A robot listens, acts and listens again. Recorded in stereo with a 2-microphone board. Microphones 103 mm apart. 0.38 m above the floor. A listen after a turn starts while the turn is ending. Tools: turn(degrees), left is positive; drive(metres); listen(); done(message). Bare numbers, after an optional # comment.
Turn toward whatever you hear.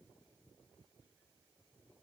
listen()
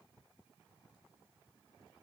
listen()
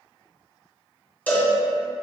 # The cowbell: about 15° left or 165° left.
turn(15)
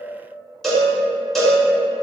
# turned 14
done("Facing the cowbell.")